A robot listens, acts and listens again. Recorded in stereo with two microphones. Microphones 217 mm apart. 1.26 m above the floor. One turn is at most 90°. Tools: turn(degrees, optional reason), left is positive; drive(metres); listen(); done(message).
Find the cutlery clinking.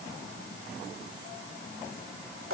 listen()
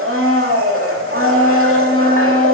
listen()
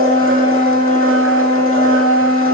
done("I can't make out cutlery clinking, only a blender.")